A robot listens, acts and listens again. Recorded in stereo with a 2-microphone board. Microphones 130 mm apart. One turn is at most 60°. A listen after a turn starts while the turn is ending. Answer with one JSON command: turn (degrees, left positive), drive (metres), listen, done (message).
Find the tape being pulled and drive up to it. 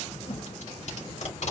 {"turn": 60}
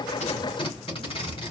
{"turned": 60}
{"turn": 45}
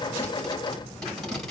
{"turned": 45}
{"drive": 1.0}
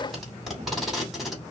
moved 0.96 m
{"drive": 1.0}
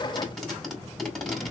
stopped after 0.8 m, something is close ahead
{"done": "Arrived at the tape being pulled, straight ahead."}